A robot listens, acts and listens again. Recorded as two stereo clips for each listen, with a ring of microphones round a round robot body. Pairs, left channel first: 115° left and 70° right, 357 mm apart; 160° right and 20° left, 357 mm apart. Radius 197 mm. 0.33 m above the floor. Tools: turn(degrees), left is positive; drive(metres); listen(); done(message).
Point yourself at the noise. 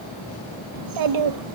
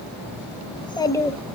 turn(degrees=-70)
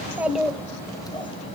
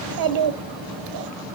turn(degrees=35)
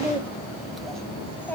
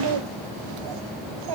turn(degrees=30)
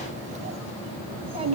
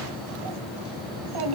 turn(degrees=10)
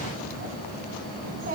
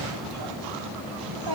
done("Found it: a child speaking, straight ahead.")